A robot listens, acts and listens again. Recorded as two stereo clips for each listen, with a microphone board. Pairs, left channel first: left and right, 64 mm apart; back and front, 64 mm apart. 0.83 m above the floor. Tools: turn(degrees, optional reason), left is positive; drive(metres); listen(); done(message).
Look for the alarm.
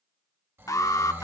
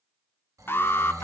turn(degrees=125, reason="The alarm: 125° left.")
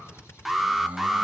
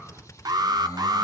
done("Found it: an alarm, straight ahead.")